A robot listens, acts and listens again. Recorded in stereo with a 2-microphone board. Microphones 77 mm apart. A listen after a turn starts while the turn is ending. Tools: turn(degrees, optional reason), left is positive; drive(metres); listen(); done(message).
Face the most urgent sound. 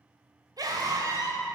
turn(degrees=-55, reason="The scream: about 55° right or 125° right.")
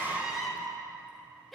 done("Found it: a scream, straight ahead, 2 to 4 m away.")